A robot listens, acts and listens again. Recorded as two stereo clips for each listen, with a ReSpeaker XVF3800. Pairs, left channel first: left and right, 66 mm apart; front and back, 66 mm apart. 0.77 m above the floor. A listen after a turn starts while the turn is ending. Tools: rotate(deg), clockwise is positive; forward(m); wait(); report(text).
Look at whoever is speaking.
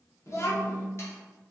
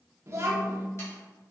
rotate(-135)
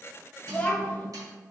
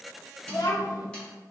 rotate(-20)
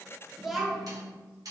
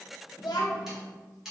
report("Found it: a child speaking, straight ahead.")